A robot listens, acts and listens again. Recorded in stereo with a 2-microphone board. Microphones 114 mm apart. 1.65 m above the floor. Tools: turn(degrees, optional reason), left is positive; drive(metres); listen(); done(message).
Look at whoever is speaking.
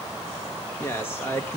turn(degrees=20, reason="The man speaking: about 20° left or 160° left.")
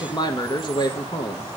turn(degrees=140, reason="So it is at 140° left.")
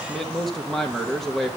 done("Found it: a man speaking, straight ahead.")